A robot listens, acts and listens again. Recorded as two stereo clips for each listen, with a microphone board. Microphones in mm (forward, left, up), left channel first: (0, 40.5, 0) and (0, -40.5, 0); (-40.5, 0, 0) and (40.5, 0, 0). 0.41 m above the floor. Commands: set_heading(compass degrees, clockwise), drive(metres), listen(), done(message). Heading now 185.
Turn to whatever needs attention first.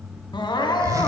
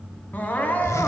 set_heading(75)
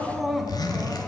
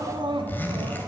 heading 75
done("Facing the crying, 1 to 2 m away.")